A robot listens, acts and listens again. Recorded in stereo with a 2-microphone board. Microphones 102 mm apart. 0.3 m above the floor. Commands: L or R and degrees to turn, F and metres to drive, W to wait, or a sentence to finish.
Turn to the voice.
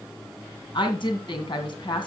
L50
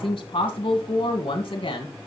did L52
L70
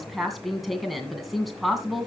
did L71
Found it: a woman speaking, straight ahead, 2 to 4 m away.